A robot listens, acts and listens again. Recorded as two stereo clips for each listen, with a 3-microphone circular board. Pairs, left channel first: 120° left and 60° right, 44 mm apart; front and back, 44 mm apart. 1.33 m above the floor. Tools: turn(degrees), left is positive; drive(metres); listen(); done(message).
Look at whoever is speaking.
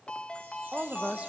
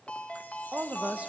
turn(degrees=-120)
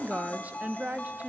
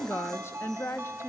done("Facing the woman speaking, 1 to 2 m away.")